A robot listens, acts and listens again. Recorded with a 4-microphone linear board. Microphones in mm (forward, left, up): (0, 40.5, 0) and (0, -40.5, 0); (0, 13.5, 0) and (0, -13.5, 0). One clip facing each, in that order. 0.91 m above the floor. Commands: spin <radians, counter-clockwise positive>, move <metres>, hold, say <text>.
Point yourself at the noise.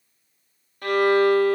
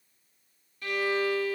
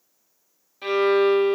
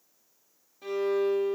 spin 0.96
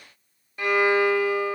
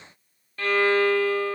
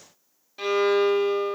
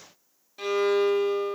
spin 0.26
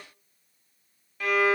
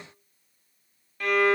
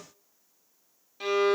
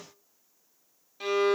say Facing the violin, under 1 m away.